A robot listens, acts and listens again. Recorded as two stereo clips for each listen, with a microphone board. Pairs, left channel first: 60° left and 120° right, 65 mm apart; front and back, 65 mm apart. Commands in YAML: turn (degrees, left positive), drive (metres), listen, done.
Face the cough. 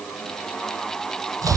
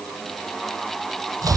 listen: true
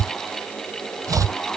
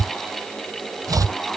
listen: true
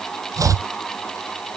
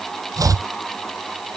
done: "I can't make out a cough to turn to."